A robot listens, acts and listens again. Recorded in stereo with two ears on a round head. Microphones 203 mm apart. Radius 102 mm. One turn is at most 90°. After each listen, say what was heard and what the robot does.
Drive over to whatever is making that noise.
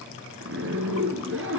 The zipper: about 65° right or 115° right. Turn 65° right.
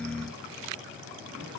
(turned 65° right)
Keep listening.
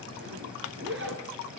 So it is at 55° right. Turn 55° right.
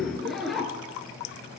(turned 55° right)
Drive 1.0 m forward.
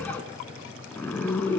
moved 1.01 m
The zipper is now 10° left. Turn 10° left.
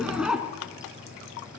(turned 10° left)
Drive 1.0 m forward.
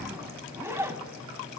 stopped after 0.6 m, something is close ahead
The zipper is now 10° right. Turn 10° right.
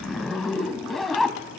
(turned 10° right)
I am next to the zipper.